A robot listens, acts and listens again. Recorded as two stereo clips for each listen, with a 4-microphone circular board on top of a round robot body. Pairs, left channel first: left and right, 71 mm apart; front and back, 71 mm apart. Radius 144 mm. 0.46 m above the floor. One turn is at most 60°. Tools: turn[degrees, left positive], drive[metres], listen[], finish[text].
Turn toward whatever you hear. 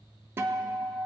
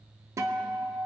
Thought: The guitar: 140° right.
Action: turn[-60]
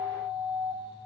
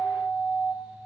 Thought: The guitar is now 95° right.
Action: turn[-60]
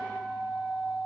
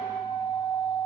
Action: finish[Found it: a guitar, straight ahead.]